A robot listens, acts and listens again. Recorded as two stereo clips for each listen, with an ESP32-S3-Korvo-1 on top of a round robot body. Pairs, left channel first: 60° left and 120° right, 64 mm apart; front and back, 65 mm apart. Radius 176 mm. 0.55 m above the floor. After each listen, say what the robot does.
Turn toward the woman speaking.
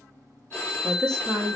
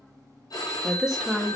Turn 95° right.
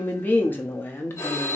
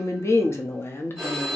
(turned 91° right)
Turn 30° left.
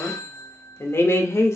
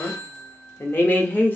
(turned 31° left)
Turn 50° left.
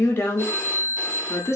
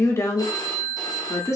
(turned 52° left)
Turn 20° left.
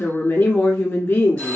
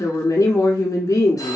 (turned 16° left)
Found it: a woman speaking, straight ahead, 1 to 2 m away.